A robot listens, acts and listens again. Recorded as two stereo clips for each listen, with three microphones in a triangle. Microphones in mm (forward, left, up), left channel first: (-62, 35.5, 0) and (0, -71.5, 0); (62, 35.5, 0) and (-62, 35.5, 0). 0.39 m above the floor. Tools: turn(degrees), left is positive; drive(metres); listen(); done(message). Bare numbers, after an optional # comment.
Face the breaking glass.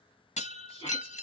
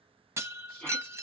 # The breaking glass: 110° left.
turn(110)
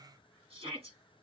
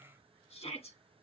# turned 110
done("I heard breaking glass from this way, but can't make it out now.")